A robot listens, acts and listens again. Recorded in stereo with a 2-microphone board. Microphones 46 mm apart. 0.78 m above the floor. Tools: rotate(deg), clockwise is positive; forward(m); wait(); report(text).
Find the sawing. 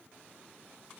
wait()
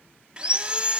rotate(20)
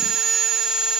report("Facing the sawing, under 1 m away.")